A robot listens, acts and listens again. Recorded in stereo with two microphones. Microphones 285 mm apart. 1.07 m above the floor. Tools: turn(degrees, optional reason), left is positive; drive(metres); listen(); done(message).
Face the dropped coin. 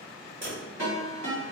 turn(degrees=-45, reason="The dropped coin: about 45° right or 135° right.")
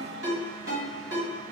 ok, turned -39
listen()
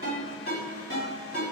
done("I heard a dropped coin, but can't make it out now. It was about 10° right or 95° right.")